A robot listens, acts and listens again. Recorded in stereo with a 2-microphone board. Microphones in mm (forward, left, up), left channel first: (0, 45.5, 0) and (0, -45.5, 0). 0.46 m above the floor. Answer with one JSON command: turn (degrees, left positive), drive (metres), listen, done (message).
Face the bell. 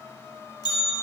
{"turn": 50}
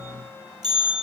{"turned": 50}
{"done": "Facing the bell."}